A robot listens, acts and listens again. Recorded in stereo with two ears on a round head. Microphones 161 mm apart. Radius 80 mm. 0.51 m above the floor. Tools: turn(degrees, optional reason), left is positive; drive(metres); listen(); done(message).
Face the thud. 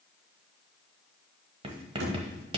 turn(degrees=-90)
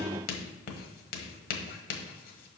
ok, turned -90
done("I heard a thud from this way, but can't make it out now.")